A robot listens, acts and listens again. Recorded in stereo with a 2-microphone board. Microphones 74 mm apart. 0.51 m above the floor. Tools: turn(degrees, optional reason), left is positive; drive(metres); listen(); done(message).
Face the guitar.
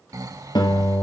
turn(degrees=90)
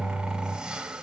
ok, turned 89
turn(degrees=10, reason="So it is at 10° left.")
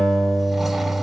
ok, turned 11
done("Found it: a guitar, straight ahead, 2 to 4 m away.")